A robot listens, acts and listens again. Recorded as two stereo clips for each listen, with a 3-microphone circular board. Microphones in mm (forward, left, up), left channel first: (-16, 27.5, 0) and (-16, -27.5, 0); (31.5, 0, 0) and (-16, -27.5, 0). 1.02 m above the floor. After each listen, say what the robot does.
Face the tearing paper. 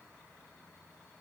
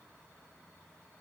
Keep listening.
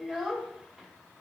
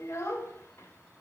Keep listening.
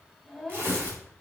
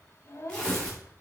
Turn 45° right.
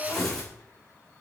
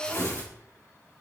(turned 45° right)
Found it: tearing paper, straight ahead, 2 to 4 m away.